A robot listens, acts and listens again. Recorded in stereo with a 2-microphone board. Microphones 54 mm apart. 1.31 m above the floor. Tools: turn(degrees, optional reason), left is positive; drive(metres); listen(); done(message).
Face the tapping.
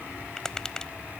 turn(degrees=30)
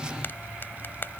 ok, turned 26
turn(degrees=145, reason="So it is at 145° left.")
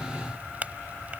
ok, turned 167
turn(degrees=-25, reason="The tapping is now 25° right.")
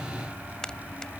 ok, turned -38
turn(degrees=15, reason="The tapping is now 15° left.")
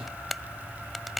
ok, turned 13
done("Found it: tapping, straight ahead.")